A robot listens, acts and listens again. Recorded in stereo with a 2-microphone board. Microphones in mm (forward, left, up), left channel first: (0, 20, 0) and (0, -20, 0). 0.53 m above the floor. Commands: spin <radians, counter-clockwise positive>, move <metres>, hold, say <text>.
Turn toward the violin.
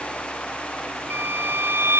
spin -1.57
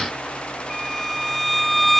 say Found it: a violin, straight ahead.